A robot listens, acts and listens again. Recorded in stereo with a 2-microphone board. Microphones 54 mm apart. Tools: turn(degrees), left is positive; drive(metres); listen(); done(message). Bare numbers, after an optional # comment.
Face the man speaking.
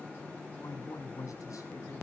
# The man speaking: about 75° left or 105° left.
turn(75)
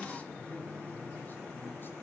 listen()
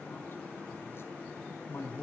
# So it is at 50° left.
turn(50)
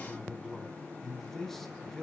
done("Facing the man speaking.")